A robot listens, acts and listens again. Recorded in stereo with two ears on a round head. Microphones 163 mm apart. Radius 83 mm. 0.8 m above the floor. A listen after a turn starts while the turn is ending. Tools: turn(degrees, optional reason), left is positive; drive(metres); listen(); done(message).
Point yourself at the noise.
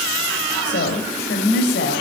turn(degrees=55, reason="The woman speaking: about 55° left or 125° left.")
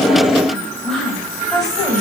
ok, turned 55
done("Found it: a woman speaking, straight ahead, over 4 m away.")